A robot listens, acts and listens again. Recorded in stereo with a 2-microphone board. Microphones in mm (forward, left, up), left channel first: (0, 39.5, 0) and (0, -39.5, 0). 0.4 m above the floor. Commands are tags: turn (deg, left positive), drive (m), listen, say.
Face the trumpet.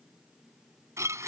<listen/>
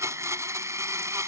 <listen/>
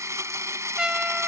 <turn deg="-30"/>
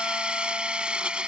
<listen/>
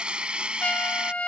<turn deg="20"/>
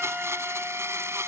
<listen/>
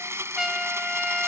<say>Facing the trumpet.</say>